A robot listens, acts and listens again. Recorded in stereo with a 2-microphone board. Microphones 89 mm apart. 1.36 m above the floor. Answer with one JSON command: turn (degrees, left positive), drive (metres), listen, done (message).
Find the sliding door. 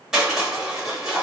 {"listen": true}
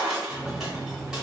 {"turn": -35}
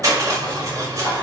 {"listen": true}
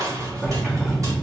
{"turn": -10}
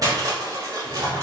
{"listen": true}
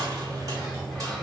{"done": "Found it: a sliding door, straight ahead, 1 to 2 m away."}